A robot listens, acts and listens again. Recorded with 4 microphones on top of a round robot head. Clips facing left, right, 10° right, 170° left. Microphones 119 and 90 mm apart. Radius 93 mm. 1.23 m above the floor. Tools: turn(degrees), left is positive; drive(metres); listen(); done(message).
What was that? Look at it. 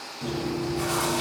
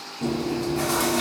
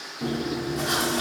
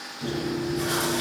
turn(degrees=-50)
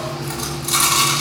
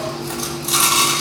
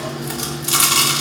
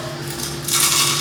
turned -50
done("Facing the chewing, 2 to 4 m away.")